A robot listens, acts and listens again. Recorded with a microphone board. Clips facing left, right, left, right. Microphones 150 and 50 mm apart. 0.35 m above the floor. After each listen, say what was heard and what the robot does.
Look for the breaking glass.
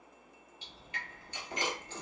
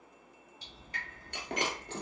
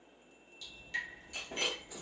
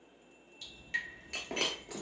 The breaking glass: about 65° right or 115° right. Turn 65° right.
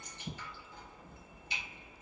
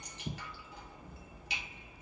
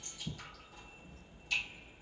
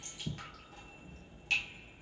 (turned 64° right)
Keep listening.
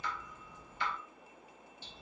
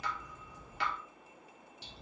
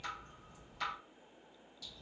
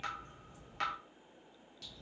I heard breaking glass, but can't make it out now. It was about straight ahead or 50° right.